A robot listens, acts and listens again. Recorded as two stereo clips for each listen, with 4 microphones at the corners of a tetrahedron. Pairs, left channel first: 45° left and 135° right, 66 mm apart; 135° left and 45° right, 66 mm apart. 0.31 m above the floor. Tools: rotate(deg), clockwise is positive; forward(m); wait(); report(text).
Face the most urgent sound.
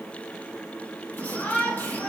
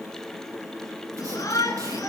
rotate(-110)
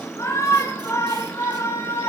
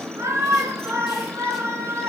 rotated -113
report("Found it: a shout, straight ahead.")